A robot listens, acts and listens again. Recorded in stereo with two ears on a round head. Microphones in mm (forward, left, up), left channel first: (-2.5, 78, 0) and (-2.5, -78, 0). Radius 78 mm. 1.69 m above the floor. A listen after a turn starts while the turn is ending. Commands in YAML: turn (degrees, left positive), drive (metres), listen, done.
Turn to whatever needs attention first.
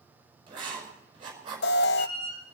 turn: 65
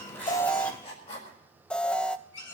done: "Facing the alarm, under 1 m away."